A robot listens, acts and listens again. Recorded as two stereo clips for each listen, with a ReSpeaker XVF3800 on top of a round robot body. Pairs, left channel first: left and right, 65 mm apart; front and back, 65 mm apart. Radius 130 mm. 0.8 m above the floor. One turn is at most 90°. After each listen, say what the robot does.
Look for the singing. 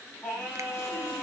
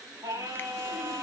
Turn 90° left.
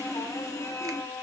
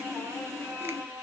Turn 90° left.
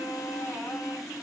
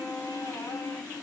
Turn 20° left.
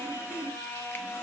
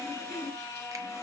Turn 45° left.
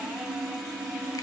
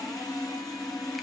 Keep listening.
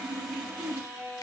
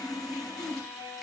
Turn 10° right.
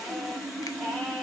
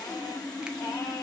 Keep listening.
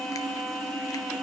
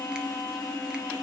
Facing the singing, over 4 m away.